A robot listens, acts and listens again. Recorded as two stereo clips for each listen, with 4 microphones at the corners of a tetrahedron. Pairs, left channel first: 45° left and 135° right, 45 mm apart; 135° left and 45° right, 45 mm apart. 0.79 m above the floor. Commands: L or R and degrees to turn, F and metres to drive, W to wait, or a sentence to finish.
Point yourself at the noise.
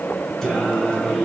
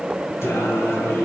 L115
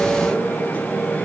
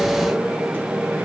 R20
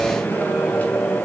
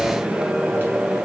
R10
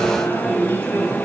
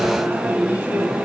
Facing the singing.